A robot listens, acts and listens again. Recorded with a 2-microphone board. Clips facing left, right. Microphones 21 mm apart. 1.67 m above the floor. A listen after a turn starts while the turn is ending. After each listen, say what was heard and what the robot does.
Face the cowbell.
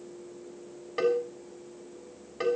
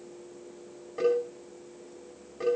The cowbell: about 70° left or 110° left. Turn 70° left.
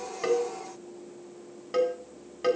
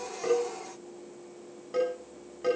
So it is at 40° left. Turn 40° left.
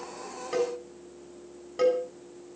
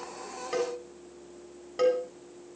The cowbell is now 10° right. Turn 10° right.
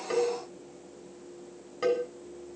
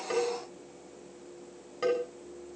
Facing the cowbell, over 4 m away.